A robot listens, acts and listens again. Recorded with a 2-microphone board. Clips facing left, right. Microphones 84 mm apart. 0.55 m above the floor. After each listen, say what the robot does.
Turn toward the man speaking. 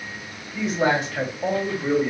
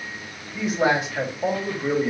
Turn 30° right.
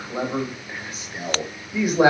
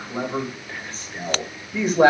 Turn 30° left.
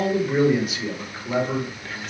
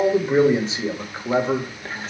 Turn 40° right.
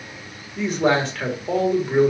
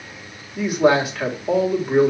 Turn 10° right.
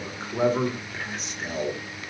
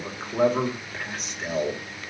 Found it: a man speaking, straight ahead, 1 to 2 m away.